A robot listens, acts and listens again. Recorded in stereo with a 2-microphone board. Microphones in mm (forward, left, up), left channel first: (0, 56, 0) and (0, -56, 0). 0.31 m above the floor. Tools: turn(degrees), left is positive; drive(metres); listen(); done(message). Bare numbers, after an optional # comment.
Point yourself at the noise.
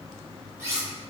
# The cutlery clinking: about 25° right or 155° right.
turn(-25)
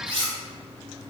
# So it is at 120° right.
turn(-120)
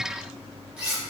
# The cutlery clinking is now 10° right.
turn(-10)
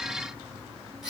done("Facing the cutlery clinking, under 1 m away.")